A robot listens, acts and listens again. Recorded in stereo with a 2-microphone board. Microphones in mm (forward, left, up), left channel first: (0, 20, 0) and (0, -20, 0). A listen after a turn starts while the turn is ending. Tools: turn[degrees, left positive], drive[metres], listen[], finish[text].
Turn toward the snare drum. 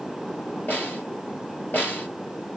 Thought: The snare drum: about 50° left or 130° left.
Action: turn[50]
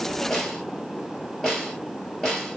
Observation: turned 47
Action: finish[Facing the snare drum, 2 to 4 m away.]